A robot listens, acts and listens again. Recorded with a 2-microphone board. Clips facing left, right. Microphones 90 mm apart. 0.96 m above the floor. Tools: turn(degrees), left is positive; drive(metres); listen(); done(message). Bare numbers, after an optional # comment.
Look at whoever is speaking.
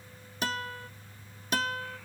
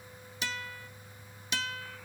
listen()
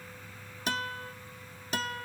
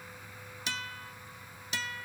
listen()
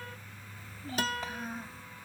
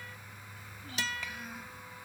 # The child speaking: about 35° left or 145° left.
turn(35)
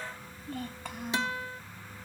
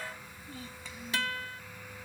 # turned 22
# So it is at 125° left.
turn(125)
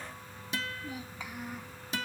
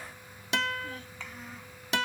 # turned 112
# The child speaking is now 10° left.
turn(10)
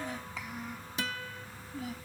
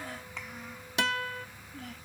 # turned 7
done("Found it: a child speaking, straight ahead.")